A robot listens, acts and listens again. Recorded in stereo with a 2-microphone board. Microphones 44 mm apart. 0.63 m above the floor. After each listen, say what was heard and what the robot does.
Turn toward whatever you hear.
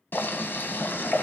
The boiling: about 55° left or 125° left. Turn 55° left.
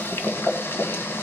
So it is at 70° left. Turn 70° left.
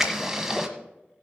Facing the boiling.